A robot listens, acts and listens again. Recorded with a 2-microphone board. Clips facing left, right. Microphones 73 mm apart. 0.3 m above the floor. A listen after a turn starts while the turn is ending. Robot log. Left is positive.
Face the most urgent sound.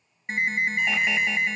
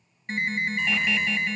note: The alarm: about 20° left or 160° left.
cmd yaw +20
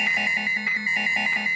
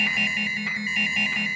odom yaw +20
note: So it is at 140° left.
cmd yaw +140
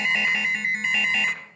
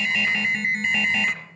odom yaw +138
end: Facing the alarm, 1 to 2 m away.